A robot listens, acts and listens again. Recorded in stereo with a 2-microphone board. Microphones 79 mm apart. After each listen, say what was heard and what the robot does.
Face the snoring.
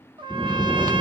The snoring: about 30° left or 150° left. Turn 30° left.
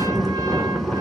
Facing the snoring, 1 to 2 m away.